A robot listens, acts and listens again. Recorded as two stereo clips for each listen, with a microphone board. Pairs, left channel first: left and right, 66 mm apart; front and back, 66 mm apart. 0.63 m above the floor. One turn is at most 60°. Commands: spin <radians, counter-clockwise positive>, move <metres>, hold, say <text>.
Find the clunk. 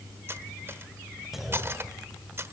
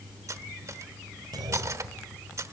spin -1.05
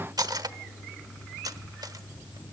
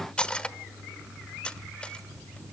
spin -1.05
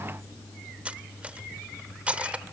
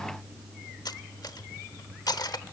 spin -0.96
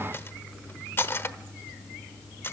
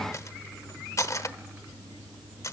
say Facing where the clunk came from. I can't hear it now.